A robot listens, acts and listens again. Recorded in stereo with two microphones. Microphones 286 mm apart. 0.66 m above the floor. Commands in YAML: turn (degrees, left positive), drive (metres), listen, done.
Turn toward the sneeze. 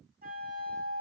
listen: true
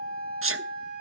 turn: -50
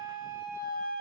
listen: true
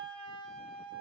done: "I heard a sneeze, but can't make it out now. It was about straight ahead or 80° right."